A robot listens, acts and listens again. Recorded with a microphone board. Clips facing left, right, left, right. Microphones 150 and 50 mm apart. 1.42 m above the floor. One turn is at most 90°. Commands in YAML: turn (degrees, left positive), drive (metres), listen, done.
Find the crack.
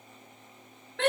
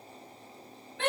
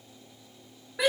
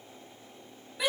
listen: true
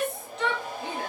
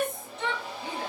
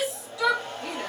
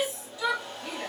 listen: true
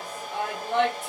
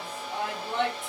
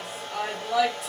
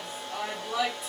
done: "I can't make out a crack, only a hair dryer and a shout."